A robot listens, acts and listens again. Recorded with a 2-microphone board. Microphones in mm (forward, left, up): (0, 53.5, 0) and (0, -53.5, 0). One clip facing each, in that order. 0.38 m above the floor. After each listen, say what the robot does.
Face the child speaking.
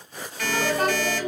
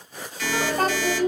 Turn 40° right.
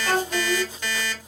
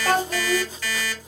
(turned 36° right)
Turn 90° right.
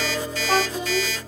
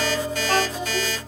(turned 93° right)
Facing the child speaking, under 1 m away.